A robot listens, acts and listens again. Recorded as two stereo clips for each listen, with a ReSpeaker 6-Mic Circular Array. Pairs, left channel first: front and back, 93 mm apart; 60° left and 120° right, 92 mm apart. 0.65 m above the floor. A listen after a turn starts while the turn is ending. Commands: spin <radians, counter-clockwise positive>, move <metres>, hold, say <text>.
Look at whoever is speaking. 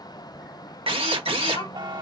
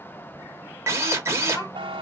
spin 0.17
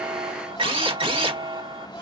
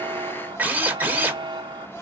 say Facing the child speaking.